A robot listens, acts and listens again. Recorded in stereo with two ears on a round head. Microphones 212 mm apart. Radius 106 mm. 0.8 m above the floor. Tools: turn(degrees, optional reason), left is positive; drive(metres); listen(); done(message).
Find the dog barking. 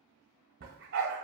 turn(degrees=-55, reason="The dog barking: about 55° right or 125° right.")
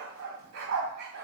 turn(degrees=-65, reason="So it is at 65° right.")
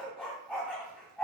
done("Facing the dog barking.")